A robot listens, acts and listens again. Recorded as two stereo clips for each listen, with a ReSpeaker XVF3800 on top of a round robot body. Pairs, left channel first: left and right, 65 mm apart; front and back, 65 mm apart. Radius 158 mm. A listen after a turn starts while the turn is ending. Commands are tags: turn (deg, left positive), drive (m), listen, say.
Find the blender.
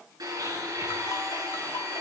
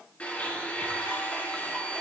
<turn deg="-70"/>
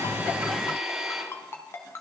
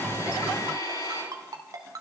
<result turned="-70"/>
<turn deg="-10"/>
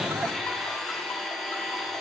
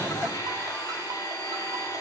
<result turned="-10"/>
<say>Found it: a blender, straight ahead, over 4 m away.</say>